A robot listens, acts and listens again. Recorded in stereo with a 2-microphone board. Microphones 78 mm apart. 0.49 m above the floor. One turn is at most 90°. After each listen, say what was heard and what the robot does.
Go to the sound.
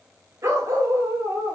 The dog barking: about 40° right or 140° right. Turn 40° right.
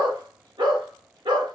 So it is at 100° right. Turn 90° right.
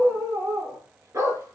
The dog barking is now 40° right. Turn 40° right.
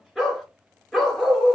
Drive 1.0 m forward.
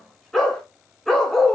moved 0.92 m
Drive 1.0 m forward.
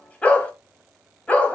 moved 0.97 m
The dog barking is now 15° left. Turn 15° left.
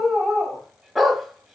Drive 1.0 m forward.
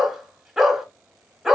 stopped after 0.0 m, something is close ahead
I am next to the dog barking.